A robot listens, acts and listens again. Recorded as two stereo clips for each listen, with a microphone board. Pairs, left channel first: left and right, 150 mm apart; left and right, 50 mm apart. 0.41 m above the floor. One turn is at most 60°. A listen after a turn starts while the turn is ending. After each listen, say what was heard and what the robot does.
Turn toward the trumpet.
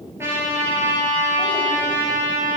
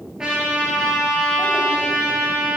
The trumpet: about 15° right or 165° right. Turn 15° right.
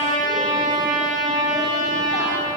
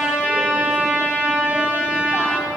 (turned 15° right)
So it is at 150° right. Turn 60° right.
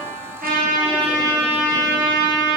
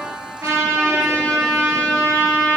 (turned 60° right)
The trumpet is now 90° right. Turn 60° right.
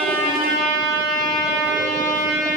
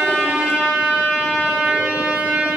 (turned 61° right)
The trumpet is now 25° right. Turn 25° right.
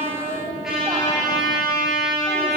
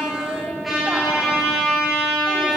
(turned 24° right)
Found it: a trumpet, straight ahead.